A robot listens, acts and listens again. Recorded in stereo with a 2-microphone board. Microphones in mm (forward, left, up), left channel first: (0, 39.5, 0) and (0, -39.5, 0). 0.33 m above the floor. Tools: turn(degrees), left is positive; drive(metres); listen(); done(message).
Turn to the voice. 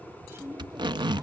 turn(degrees=-30)
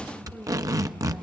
listen()
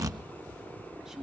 listen()
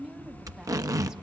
turn(degrees=-10)
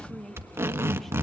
done("Found it: a woman speaking, straight ahead, 1 to 2 m away.")